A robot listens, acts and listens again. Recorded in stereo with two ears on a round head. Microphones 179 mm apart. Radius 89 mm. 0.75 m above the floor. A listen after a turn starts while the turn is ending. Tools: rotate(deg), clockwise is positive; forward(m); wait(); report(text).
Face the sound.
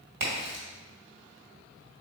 rotate(70)
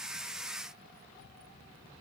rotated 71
wait()
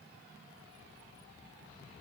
report("I heard a crack, but can't make it out now. It was about straight ahead or 40° right.")